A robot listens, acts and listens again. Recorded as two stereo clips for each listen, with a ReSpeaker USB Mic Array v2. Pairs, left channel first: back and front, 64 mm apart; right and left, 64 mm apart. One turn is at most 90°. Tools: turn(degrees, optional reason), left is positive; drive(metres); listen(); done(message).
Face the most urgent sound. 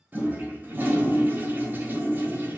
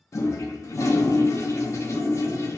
listen()
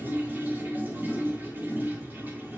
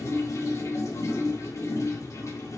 listen()
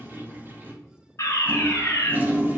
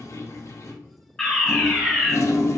turn(degrees=-90, reason="The fire alarm: 165° right.")
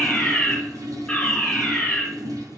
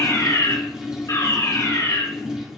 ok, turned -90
turn(degrees=-90, reason="The fire alarm is now 100° right.")
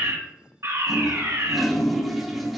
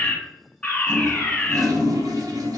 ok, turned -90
turn(degrees=-20, reason="The fire alarm is now 20° right.")
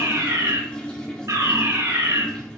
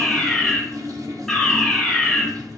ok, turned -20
done("Facing the fire alarm, 1 to 2 m away.")